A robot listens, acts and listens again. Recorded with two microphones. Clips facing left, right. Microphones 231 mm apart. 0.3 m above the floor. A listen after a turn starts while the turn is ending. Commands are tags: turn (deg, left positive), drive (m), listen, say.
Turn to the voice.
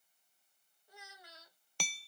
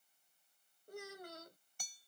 <turn deg="-50"/>
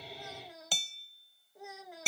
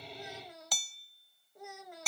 <say>Facing the child speaking.</say>